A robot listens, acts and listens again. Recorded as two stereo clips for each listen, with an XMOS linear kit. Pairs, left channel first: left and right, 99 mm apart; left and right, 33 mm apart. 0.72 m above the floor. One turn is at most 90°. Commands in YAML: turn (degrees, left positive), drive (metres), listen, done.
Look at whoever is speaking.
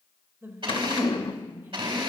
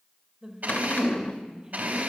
turn: -25
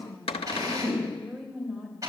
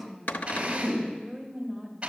done: "Facing the woman speaking, 2 to 4 m away."